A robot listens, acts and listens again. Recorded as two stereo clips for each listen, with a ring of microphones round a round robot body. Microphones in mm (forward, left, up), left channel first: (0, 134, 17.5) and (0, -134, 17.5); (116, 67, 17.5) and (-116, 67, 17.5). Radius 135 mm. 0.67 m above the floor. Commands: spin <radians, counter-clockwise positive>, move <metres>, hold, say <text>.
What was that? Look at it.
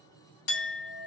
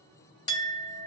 spin 1.31
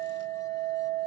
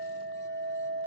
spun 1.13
spin 0.17
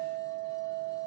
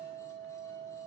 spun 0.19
say Facing the clink, 1 to 2 m away.